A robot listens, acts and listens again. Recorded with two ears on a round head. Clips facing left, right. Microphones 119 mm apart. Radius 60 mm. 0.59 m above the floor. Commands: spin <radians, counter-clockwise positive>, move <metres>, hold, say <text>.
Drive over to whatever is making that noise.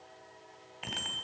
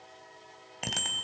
spin -0.87
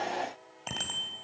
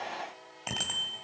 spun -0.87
move 1.0
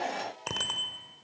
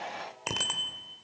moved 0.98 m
move 1.0
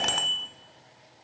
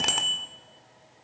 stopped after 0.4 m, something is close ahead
say I am next to the bicycle bell.